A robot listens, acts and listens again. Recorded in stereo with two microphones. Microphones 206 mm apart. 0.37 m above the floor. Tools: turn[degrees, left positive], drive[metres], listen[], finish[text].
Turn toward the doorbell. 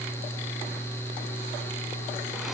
Action: listen[]
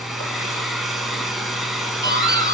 Thought: The doorbell: about 20° left or 160° left.
Action: turn[20]
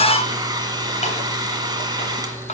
Thought: So it is at 140° left.
Action: turn[140]
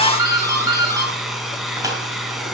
Thought: The doorbell is now 20° right.
Action: turn[-20]
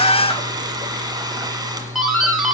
Action: finish[Found it: a doorbell, straight ahead.]